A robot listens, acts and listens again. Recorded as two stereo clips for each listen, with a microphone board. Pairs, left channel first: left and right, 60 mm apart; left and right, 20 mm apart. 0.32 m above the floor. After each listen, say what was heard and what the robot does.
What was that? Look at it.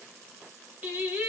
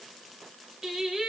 The singing: about 30° right or 150° right. Turn 30° right.
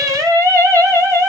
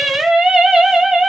So it is at 115° right. Turn 115° right.
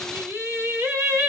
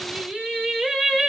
The singing is now 35° right. Turn 35° right.
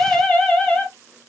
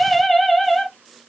The singing is now 15° left. Turn 15° left.
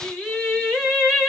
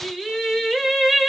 Facing the singing, 1 to 2 m away.